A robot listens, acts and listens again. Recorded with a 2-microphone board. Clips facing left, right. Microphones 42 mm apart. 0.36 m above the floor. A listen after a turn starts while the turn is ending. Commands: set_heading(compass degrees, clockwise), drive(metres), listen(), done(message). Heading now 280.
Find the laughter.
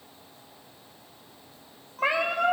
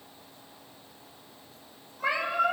listen()
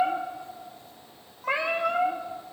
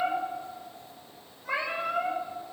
listen()
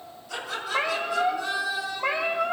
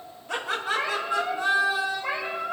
set_heading(310)
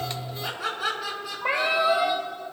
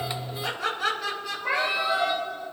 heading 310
done("Found it: laughter, straight ahead, over 4 m away.")